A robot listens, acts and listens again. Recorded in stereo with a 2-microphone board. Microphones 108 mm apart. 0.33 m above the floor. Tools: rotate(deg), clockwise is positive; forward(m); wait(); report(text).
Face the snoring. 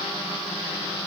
wait()
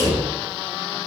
wait()
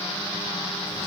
report("I can't make out snoring to turn to.")